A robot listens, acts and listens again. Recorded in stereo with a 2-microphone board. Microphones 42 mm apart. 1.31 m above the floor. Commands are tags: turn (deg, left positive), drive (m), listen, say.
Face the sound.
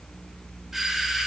<turn deg="-30"/>
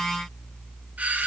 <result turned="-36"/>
<turn deg="-135"/>
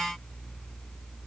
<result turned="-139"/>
<listen/>
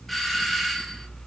<say>Facing the doorbell, 2 to 4 m away.</say>